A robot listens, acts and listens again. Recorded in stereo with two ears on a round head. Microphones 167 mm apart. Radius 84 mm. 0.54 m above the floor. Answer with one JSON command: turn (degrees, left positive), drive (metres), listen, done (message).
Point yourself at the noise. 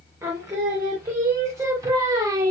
{"turn": -20}
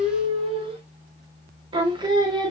{"turn": -25}
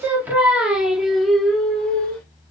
{"done": "Facing the singing."}